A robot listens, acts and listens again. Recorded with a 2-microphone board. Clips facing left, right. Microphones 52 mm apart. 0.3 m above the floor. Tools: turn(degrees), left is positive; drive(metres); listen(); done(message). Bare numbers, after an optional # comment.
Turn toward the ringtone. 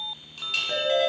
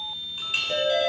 # The ringtone: about 40° left or 140° left.
turn(40)
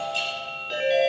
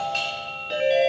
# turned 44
done("Found it: a ringtone, straight ahead.")